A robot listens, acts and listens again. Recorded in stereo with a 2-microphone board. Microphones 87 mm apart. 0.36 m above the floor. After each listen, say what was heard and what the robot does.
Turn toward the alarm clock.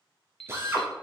Turn 30° left.
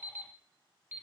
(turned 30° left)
So it is at 25° right. Turn 25° right.
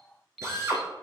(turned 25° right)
Found it: an alarm clock, straight ahead, 1 to 2 m away.